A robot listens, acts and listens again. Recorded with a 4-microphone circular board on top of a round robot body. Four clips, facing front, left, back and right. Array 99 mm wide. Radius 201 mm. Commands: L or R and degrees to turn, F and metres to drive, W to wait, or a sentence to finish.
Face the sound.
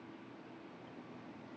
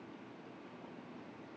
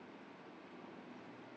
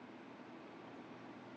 W
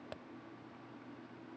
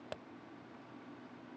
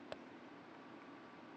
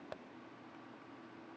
W
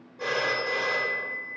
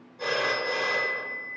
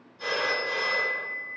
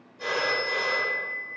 L15
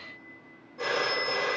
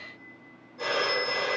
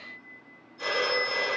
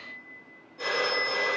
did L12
Found it: a phone ringing, straight ahead, 1 to 2 m away.